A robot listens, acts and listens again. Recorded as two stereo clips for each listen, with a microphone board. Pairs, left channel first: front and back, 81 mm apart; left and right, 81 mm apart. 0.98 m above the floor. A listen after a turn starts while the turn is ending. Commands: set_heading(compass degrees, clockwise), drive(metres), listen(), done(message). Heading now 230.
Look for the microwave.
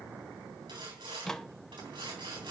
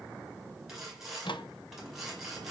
set_heading(145)
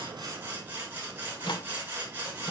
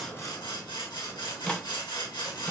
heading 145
set_heading(135)
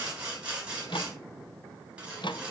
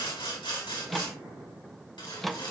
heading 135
done("Facing the microwave, under 1 m away.")